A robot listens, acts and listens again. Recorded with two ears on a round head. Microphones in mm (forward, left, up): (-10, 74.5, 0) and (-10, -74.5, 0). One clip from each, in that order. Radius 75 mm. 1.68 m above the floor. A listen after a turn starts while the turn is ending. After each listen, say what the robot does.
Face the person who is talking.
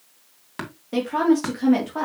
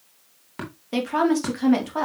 Turn 30° right.
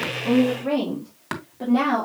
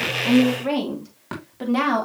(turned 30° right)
Turn 120° right.
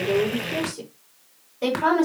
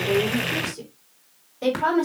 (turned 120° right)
Facing the woman speaking, over 4 m away.